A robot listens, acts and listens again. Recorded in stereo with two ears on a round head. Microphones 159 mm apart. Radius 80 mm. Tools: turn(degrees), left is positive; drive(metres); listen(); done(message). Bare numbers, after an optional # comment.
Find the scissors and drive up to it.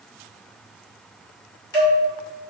# The scissors: about 20° left or 160° left.
turn(20)
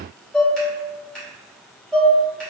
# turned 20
drive(1.0)
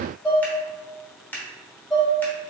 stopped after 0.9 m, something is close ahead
# The scissors is now 10° left.
turn(10)
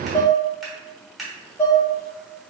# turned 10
done("Arrived at the scissors, straight ahead.")